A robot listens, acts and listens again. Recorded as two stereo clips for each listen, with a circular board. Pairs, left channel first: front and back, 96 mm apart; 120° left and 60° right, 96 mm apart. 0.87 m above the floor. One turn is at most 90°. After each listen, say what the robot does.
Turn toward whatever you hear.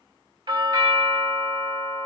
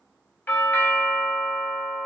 Turn 90° right.
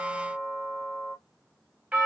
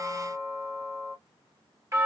Turn 90° right.
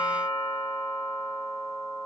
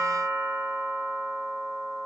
Turn 15° right.
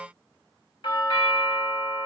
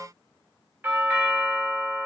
Found it: a doorbell, straight ahead, 1 to 2 m away.